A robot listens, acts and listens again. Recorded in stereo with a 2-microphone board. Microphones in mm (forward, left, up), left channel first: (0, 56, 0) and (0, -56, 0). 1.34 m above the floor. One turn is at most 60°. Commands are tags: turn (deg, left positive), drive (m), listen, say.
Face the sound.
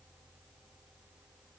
<listen/>
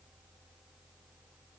<listen/>
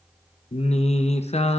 <turn deg="60"/>
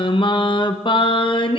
<turn deg="45"/>
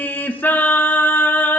<turn deg="15"/>
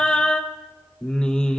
<say>Found it: singing, straight ahead.</say>